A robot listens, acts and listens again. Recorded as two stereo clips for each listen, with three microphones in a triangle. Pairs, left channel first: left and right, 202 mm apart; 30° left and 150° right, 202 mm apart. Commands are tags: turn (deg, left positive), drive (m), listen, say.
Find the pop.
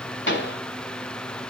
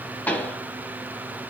<turn deg="110"/>
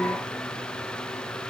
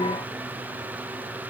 <say>Facing where the pop came from. I can't hear it now.</say>